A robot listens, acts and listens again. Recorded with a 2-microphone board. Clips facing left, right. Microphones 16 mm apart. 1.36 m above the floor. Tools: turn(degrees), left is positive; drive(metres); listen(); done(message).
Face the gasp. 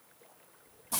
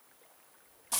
listen()
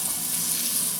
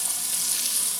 listen()
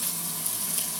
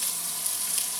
done("I can't make out a gasp, only frying.")